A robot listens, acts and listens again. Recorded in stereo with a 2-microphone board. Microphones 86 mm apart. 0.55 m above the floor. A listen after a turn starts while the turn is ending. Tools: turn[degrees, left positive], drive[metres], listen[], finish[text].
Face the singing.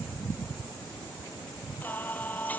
Thought: The singing: about 20° left or 160° left.
Action: turn[20]
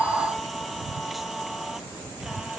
Action: finish[Facing the singing.]